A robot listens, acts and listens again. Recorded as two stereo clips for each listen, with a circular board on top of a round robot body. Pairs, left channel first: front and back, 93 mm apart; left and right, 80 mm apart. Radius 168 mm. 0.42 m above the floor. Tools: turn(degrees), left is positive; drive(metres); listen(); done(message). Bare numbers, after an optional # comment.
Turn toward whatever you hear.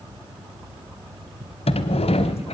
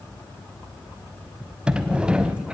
# The sliding door: 10° right.
turn(-10)
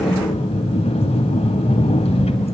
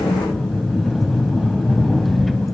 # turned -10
done("Found it: a sliding door, straight ahead, 1 to 2 m away.")